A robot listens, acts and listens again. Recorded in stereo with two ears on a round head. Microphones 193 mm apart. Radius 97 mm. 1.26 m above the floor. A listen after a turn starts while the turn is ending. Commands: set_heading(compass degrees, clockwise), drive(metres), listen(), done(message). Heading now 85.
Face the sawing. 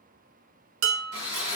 set_heading(145)
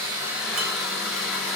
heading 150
done("Facing the sawing.")